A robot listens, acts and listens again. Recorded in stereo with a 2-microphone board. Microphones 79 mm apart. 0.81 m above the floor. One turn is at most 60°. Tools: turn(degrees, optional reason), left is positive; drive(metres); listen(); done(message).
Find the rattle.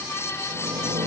turn(degrees=-60)
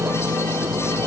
turn(degrees=-30, reason="So it is at 30° right.")
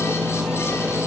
done("Facing the rattle.")